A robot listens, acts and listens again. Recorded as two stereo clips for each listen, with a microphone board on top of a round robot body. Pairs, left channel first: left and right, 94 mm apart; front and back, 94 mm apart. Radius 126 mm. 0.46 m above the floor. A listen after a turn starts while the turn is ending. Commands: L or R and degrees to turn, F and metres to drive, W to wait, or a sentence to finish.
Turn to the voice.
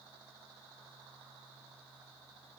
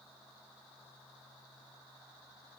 W
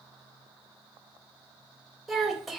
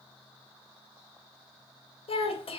Facing the child speaking, 1 to 2 m away.